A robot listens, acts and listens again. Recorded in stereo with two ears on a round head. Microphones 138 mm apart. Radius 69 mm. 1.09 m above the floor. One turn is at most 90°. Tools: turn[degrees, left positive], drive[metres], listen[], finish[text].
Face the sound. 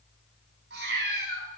Action: turn[-90]
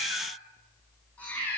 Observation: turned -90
Thought: So it is at 10° left.
Action: turn[10]
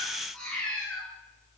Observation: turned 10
Action: finish[Found it: a cat meowing, straight ahead, over 4 m away.]